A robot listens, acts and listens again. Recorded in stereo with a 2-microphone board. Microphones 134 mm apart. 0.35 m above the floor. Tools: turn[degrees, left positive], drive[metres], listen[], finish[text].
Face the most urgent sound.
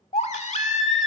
Thought: The baby crying: about 60° left or 120° left.
Action: turn[60]
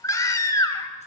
Thought: So it is at 30° left.
Action: turn[30]
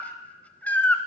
Thought: The baby crying is now 15° left.
Action: turn[15]
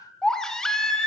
Action: finish[Found it: a baby crying, straight ahead, 1 to 2 m away.]